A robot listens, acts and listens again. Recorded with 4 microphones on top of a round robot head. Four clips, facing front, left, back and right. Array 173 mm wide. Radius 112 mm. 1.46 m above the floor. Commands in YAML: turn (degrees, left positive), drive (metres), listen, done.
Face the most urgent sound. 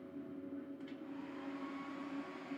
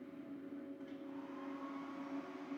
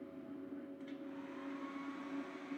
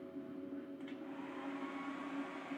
listen: true
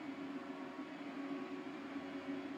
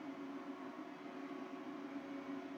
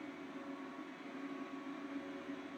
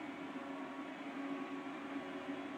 listen: true
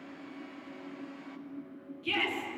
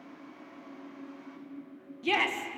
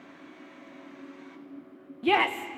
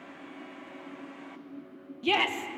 turn: -170
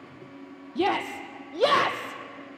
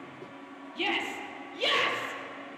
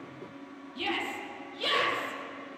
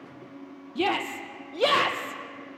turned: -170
turn: -30
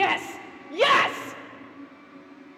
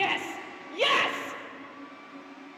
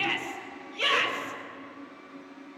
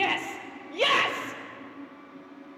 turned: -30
done: "Facing the shout."